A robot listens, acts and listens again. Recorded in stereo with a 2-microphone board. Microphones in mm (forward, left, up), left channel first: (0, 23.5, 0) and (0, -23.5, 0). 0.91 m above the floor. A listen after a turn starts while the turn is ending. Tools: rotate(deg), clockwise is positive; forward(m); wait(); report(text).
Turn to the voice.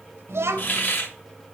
rotate(75)
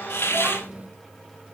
rotate(30)
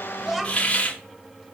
report("Facing the child speaking.")